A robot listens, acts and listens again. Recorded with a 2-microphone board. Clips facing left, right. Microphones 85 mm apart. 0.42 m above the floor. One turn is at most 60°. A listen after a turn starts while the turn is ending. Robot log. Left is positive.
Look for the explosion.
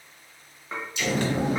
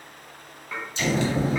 note: The explosion: about 30° right or 150° right.
cmd yaw -30
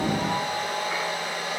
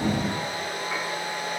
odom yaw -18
cmd idle
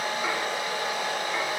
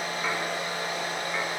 end: I heard an explosion, but can't make it out now. It was about 15° right or 130° right.